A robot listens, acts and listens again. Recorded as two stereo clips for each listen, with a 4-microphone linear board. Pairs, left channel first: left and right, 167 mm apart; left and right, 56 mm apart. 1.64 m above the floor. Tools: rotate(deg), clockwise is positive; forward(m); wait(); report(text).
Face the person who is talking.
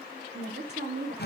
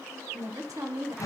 rotate(90)
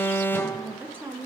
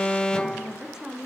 rotate(10)
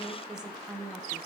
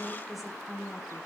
report("Found it: a woman speaking, straight ahead, 1 to 2 m away.")